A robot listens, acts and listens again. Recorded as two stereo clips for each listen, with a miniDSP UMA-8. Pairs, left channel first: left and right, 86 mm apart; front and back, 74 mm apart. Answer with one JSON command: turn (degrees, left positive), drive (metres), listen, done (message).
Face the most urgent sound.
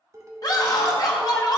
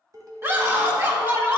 {"turn": 125}
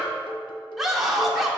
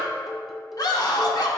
{"done": "Found it: a scream, straight ahead."}